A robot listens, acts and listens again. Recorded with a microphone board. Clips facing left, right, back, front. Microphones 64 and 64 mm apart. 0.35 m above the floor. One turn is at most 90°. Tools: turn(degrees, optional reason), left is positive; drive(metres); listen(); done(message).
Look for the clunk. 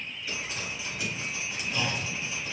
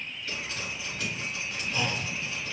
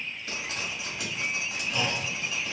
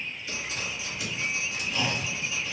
turn(degrees=-90, reason="The clunk: 155° right.")
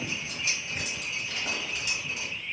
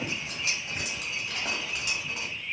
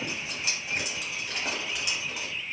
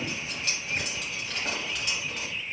turn(degrees=-65, reason="Nothing new. It was at 65° right.")
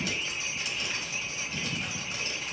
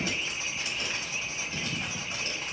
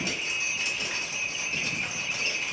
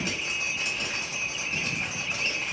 done("I heard a clunk from this way, but can't make it out now.")